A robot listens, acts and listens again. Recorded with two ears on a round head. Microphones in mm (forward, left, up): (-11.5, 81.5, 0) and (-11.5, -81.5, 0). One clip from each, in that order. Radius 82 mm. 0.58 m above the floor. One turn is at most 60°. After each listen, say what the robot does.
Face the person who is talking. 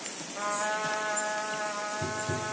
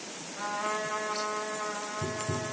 Keep listening.
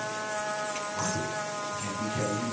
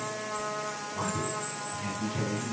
Turn 30° left.
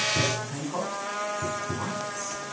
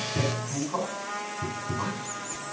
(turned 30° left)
Turn 30° right.
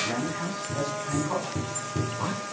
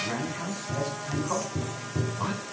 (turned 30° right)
Found it: a man speaking, straight ahead.